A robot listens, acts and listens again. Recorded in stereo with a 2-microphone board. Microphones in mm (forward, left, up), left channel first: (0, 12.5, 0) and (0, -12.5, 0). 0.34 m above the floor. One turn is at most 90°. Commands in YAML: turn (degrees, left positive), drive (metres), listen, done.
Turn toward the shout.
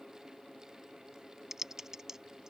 listen: true
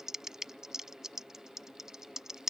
listen: true
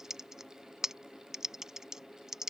done: "I can't make out a shout, only typing on a keyboard."